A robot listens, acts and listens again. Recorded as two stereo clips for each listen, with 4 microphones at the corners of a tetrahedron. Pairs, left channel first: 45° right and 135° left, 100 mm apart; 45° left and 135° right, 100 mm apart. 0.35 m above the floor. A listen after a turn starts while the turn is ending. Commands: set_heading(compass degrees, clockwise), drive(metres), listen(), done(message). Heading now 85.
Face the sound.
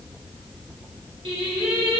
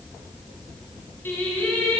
set_heading(330)
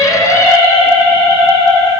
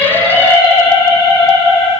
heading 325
done("Facing the singing, 2 to 4 m away.")